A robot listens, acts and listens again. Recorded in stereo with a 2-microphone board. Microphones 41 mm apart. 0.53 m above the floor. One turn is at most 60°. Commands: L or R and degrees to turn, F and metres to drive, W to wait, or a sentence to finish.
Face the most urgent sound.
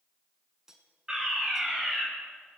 R15
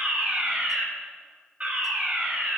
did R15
R60
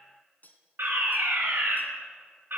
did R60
R60
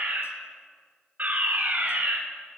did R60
R45
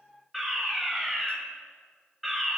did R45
Found it: a fire alarm, straight ahead, over 4 m away.